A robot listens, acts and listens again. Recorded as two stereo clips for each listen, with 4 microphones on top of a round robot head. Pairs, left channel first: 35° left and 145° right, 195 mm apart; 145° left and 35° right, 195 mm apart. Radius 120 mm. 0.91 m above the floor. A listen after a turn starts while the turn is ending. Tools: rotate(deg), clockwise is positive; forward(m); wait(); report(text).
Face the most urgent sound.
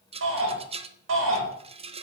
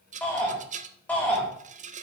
rotate(130)
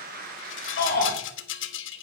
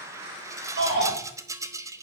rotate(10)
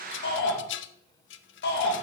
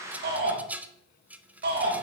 report("Found it: a shout, straight ahead, over 4 m away.")